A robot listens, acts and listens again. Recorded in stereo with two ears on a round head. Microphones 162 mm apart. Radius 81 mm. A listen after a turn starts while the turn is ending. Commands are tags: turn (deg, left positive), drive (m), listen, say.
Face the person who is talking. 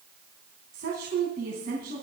<turn deg="-50"/>
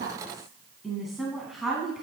<say>Found it: a woman speaking, straight ahead.</say>